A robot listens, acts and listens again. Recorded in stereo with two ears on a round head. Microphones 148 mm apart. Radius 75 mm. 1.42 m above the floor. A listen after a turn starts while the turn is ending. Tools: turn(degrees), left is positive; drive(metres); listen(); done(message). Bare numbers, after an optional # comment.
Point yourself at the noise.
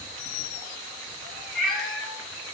turn(30)
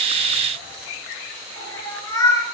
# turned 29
# So it is at 160° left.
turn(160)
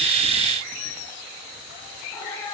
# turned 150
# The cat meowing is now 20° left.
turn(20)
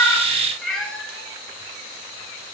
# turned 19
done("Found it: a cat meowing, straight ahead, 2 to 4 m away.")